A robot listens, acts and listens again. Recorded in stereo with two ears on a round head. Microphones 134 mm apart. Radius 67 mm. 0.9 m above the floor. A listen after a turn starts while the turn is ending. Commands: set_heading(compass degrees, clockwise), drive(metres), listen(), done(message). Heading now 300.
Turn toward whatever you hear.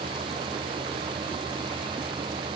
listen()
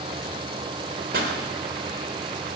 set_heading(5)
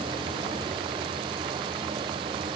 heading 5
listen()
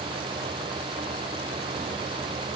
done("I heard a pop, but can't make it out now. It was about straight ahead or 50° right.")